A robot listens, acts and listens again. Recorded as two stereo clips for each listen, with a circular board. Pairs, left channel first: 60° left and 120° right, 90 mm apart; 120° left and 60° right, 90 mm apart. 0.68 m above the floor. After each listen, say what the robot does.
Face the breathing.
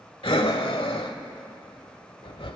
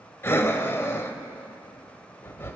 Turn 55° left.
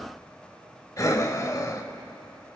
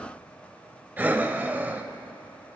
Turn 10° left.
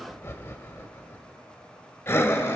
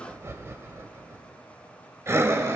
Facing the breathing, 1 to 2 m away.